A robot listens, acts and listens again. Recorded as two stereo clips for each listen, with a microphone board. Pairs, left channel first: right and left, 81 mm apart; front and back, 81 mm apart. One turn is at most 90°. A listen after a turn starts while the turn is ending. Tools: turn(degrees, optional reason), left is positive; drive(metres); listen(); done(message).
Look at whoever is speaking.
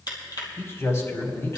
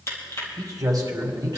turn(degrees=-90, reason="The man speaking: 145° right.")
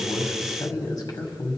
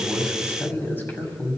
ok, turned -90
turn(degrees=-60, reason="The man speaking is now 60° right.")
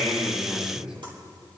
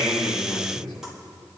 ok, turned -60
turn(degrees=10, reason="The man speaking is now 10° left.")
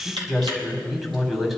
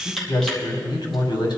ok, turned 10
done("Found it: a man speaking, straight ahead.")